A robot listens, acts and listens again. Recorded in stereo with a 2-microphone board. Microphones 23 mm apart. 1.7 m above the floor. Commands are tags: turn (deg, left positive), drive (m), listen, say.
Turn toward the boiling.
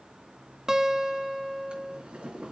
<turn deg="-55"/>
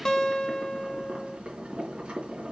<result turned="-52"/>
<turn deg="-65"/>
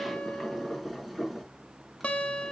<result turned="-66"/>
<say>Facing the boiling, over 4 m away.</say>